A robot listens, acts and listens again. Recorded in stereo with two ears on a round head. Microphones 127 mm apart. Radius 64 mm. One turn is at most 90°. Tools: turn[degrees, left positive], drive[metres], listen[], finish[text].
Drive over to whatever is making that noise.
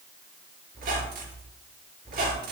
Thought: The squeak: about 70° right or 110° right.
Action: turn[-70]
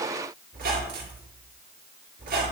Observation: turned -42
Thought: So it is at 65° right.
Action: turn[-65]
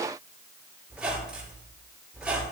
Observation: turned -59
Action: drive[1.0]
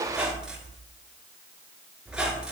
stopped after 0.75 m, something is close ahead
Action: finish[Blocked. The squeak is further on, straight ahead.]